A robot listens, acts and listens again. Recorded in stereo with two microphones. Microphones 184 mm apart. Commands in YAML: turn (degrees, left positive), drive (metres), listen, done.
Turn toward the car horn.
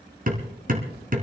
listen: true
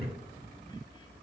listen: true
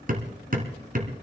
done: "I can't make out a car horn to turn to."